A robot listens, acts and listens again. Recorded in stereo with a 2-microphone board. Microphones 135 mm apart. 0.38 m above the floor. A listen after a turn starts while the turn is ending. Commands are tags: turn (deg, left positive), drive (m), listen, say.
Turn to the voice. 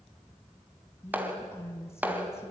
<turn deg="20"/>
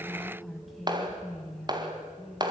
<say>Found it: a woman speaking, straight ahead, 2 to 4 m away.</say>